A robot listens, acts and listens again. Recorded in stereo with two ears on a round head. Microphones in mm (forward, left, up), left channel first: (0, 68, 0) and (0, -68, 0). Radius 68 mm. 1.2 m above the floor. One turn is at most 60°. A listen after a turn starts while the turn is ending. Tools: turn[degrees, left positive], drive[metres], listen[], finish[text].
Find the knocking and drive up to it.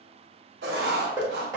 Thought: The knocking: about 25° right or 155° right.
Action: turn[-25]
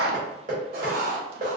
Thought: So it is at 125° right.
Action: turn[-60]
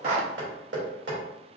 Thought: The knocking is now 85° right.
Action: turn[-60]
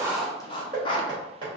Thought: The knocking is now 30° right.
Action: turn[-30]
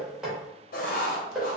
Action: drive[1.0]
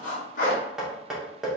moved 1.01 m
Action: drive[1.0]
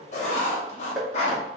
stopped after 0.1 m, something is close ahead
Action: finish[I am next to the knocking.]